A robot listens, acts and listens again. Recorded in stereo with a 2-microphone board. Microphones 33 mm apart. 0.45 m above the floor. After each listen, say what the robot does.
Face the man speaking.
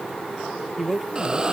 Turn 30° right.
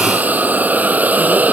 Keep listening.
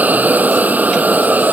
Keep listening.
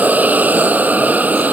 I heard a man speaking, but can't make it out now. It was about 25° left or 145° right.